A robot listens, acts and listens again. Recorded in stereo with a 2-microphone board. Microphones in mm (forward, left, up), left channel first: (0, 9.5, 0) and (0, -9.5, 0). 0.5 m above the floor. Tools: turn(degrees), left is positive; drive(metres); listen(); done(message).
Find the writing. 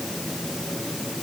listen()
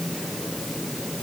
listen()
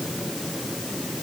done("I can't make out writing to turn to.")